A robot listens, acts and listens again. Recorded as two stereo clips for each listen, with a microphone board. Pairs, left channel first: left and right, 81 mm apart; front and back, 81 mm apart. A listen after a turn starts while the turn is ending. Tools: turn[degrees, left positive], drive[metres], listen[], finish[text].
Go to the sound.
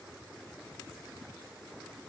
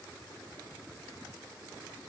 Action: listen[]
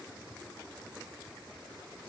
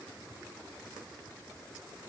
Action: listen[]
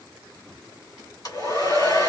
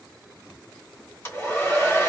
Thought: The hair dryer: 60° left.
Action: turn[60]
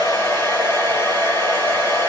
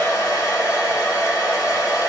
Thought: The hair dryer is now 45° left.
Action: turn[45]
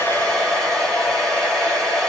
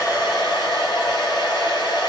Thought: The hair dryer is now 10° left.
Action: turn[10]
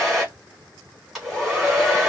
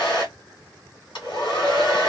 Action: drive[1.0]
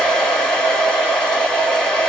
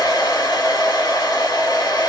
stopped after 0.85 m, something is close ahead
Thought: The hair dryer is now 10° left.
Action: turn[10]
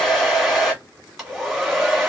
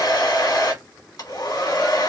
Action: finish[Arrived at the hair dryer, straight ahead.]